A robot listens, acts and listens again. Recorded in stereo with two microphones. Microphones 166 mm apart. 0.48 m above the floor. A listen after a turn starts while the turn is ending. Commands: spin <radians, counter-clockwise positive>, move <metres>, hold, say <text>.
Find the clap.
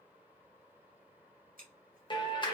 spin 0.52
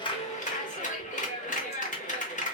spin 2.09
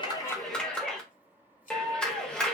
say Facing the clap.